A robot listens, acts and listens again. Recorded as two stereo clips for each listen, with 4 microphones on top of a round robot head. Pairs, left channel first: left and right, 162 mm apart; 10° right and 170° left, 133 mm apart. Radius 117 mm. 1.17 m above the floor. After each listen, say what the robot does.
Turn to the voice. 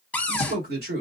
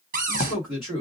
Turn 110° right.
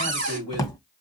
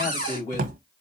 Turn 20° left.
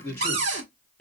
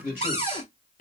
Found it: a man speaking, straight ahead.